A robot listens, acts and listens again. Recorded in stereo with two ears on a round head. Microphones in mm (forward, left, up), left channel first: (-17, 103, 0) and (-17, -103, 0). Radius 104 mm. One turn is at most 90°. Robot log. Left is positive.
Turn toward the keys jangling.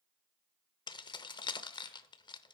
note: The keys jangling: about 20° left or 160° left.
cmd yaw +20
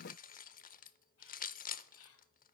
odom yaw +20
note: So it is at 135° left.
cmd yaw +90
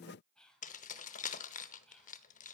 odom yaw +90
note: The keys jangling is now 35° left.
cmd yaw +35
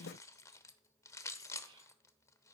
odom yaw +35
note: The keys jangling is now 15° left.
cmd yaw +15
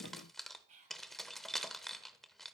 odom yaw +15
end: Facing the keys jangling, under 1 m away.